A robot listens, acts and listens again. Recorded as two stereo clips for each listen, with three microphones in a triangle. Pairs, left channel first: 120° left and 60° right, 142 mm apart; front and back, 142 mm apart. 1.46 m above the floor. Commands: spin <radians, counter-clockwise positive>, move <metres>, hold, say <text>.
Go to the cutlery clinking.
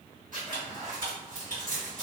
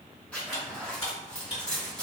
spin -0.70
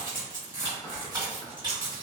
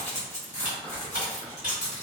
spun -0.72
move 1.0
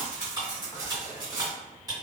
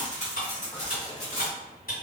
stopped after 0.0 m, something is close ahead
say Something is in my way. I am facing the cutlery clinking but have not reached it.